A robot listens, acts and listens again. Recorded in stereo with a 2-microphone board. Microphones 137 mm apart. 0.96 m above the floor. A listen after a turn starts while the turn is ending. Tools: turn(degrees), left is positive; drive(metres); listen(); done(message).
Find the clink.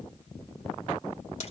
listen()
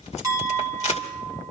turn(degrees=-25)
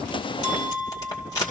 turn(degrees=-125)
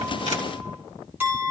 turn(degrees=-15)
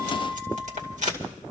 listen()
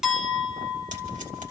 done("Facing the clink.")